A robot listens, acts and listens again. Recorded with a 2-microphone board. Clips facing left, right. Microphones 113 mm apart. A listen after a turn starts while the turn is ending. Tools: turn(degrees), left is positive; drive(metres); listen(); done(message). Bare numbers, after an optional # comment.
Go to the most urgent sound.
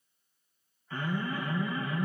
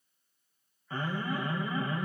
# The alarm: about 30° right or 150° right.
turn(-30)
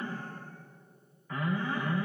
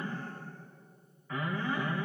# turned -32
drive(1.0)
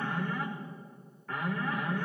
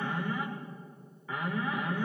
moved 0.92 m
drive(1.0)
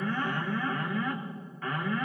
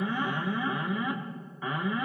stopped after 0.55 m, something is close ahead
# The alarm is now 15° right.
turn(-15)
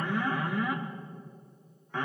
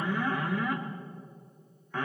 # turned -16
done("Arrived at the alarm, straight ahead.")